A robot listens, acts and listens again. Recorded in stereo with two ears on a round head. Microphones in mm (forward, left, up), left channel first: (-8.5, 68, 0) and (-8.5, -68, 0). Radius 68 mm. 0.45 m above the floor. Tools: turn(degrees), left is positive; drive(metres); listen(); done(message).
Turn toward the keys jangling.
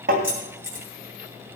turn(degrees=-15)
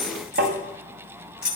done("Found it: keys jangling, straight ahead.")